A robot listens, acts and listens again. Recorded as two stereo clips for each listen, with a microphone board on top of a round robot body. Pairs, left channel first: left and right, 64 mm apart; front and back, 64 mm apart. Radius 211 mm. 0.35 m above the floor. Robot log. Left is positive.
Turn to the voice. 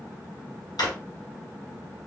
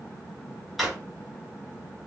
cmd idle
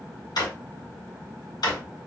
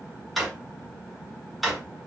cmd idle
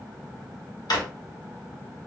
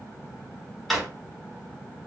end: I can't make out anyone speaking to turn to.